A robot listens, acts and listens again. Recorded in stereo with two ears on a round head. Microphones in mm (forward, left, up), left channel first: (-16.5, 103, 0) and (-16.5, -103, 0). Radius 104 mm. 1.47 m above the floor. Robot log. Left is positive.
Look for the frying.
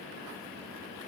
cmd idle
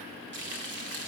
note: The frying: about 55° right or 125° right.
cmd yaw -55
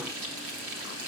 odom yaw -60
note: So it is at 65° right.
cmd yaw -65
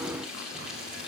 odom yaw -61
end: Found it: frying, straight ahead, 2 to 4 m away.